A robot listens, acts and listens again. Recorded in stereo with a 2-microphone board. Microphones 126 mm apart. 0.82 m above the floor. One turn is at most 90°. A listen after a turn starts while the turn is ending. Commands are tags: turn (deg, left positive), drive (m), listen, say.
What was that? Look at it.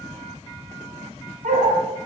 <turn deg="-70"/>
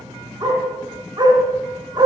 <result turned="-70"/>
<turn deg="-35"/>
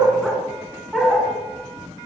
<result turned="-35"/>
<say>Facing the dog barking, 2 to 4 m away.</say>